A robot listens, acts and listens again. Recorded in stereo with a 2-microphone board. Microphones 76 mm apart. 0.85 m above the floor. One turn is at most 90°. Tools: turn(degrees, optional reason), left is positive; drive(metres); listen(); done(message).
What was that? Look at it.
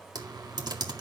turn(degrees=-70, reason="The typing on a keyboard: about 70° right or 110° right.")
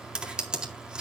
turn(degrees=-15, reason="So it is at 15° right.")
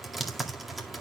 done("Found it: typing on a keyboard, straight ahead.")